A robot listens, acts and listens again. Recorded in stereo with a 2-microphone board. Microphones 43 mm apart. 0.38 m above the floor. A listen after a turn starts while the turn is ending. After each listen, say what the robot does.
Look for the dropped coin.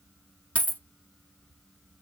Turn 40° left.
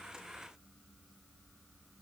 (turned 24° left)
Keep listening.
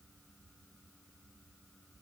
I heard a dropped coin, but can't make it out now. It was about 15° left or 115° left.